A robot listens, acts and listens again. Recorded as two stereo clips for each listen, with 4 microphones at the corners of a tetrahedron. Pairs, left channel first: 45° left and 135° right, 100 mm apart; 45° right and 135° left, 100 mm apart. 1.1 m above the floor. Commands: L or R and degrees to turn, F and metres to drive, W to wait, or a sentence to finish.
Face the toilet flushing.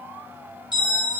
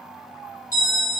W
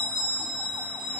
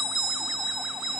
W
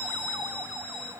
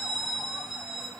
I can't make out a toilet flushing, only a bell.